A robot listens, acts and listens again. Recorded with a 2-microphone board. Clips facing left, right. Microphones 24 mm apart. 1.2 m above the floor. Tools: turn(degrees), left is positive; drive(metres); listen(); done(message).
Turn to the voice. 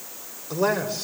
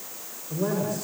turn(degrees=70)
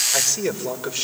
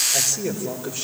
turn(degrees=55)
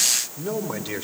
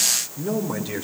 turn(degrees=25)
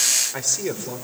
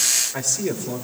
turn(degrees=20)
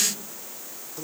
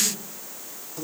turn(degrees=10)
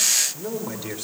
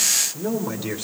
done("Found it: a man speaking, straight ahead, 2 to 4 m away.")